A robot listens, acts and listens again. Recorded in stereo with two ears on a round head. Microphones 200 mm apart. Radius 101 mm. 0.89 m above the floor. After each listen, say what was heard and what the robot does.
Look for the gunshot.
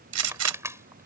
Turn 90° right.
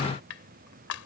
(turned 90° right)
I heard a gunshot from this way, but can't make it out now.